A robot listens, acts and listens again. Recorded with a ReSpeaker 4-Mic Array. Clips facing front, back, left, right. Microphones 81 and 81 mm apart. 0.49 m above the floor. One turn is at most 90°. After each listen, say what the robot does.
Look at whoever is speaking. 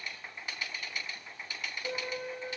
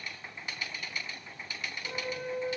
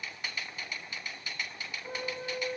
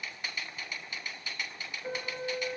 Keep listening.
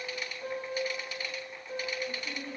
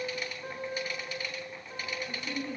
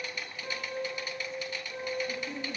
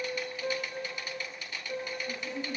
Turn 20° right.
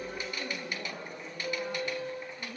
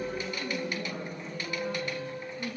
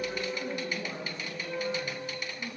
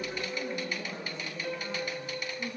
Turn 10° left.
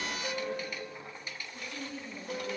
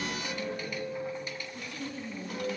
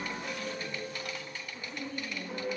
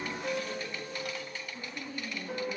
Found it: a woman speaking, straight ahead, over 4 m away.